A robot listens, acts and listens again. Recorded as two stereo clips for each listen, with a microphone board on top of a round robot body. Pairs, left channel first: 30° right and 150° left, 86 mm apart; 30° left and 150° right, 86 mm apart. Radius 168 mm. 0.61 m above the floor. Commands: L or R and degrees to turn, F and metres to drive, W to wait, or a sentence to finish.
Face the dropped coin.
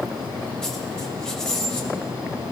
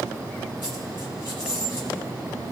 L50
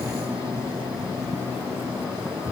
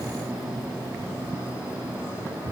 I heard a dropped coin from this way, but can't make it out now.